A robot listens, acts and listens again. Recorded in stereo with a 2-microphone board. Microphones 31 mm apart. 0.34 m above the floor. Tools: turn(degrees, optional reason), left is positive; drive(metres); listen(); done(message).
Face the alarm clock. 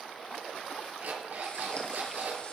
turn(degrees=-75, reason="The alarm clock: about 75° right or 105° right.")
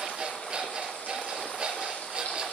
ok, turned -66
turn(degrees=-40, reason="So it is at 40° right.")
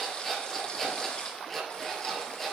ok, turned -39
done("Found it: an alarm clock, straight ahead, over 4 m away.")